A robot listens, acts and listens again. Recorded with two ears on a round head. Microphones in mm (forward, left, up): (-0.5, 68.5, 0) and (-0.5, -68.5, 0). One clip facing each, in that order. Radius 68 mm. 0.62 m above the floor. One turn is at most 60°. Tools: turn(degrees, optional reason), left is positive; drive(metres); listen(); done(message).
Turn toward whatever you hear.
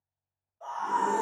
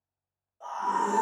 turn(degrees=-60, reason="The scream: about 60° right or 120° right.")
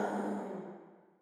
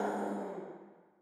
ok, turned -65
turn(degrees=-25, reason="So it is at 25° right.")
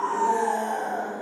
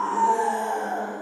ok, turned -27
done("Facing the scream.")